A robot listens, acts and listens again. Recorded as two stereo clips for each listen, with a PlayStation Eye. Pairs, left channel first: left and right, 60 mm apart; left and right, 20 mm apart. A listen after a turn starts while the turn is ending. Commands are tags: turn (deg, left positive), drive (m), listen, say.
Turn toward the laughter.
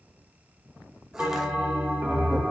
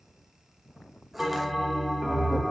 <turn deg="30"/>
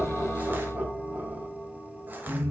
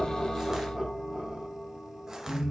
<turn deg="-50"/>
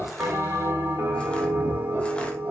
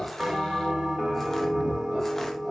<listen/>
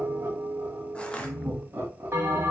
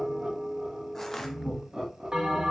<turn deg="-45"/>
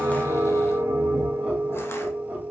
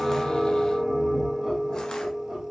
<listen/>
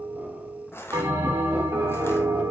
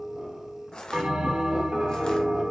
<listen/>
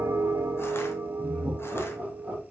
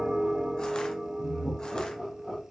<turn deg="-20"/>
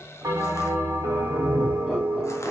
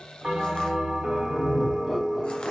<listen/>
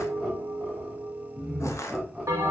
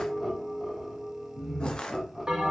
<say>Found it: laughter, straight ahead.</say>